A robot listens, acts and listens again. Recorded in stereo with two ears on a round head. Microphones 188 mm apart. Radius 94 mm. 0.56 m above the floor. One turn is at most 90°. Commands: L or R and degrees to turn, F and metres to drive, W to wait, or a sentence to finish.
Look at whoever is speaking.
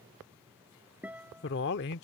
L50
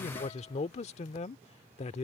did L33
L35
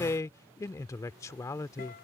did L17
L15
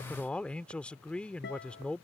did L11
Facing the man speaking.